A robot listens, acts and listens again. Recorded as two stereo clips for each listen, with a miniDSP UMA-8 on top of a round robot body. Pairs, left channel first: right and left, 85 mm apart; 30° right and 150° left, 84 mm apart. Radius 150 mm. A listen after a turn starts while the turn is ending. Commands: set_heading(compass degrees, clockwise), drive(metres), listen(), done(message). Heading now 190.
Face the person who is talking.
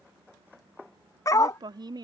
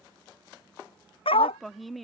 set_heading(130)
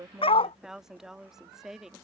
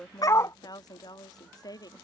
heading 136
done("Found it: a woman speaking, straight ahead.")